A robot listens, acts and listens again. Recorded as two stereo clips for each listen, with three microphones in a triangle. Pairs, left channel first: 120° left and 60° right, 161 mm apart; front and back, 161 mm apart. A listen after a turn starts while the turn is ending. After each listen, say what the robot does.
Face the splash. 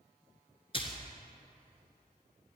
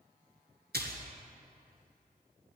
Turn 175° left.
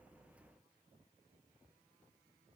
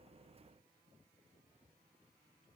Facing where the splash came from. I can't hear it now.